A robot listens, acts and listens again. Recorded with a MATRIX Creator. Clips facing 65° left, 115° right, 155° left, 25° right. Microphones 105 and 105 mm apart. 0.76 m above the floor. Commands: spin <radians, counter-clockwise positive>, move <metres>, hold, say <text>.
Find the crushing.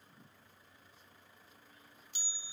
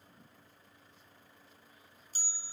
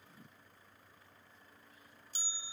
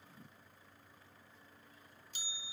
hold
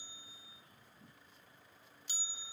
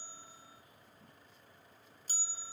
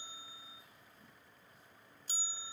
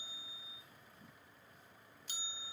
hold
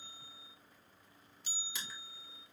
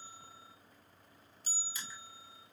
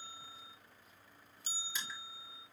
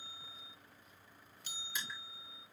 spin 1.13
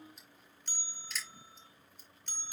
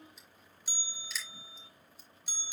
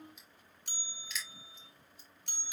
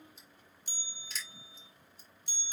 spin 0.44
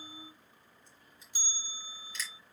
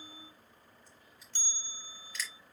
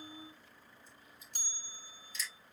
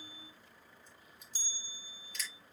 say Facing the crushing, over 4 m away.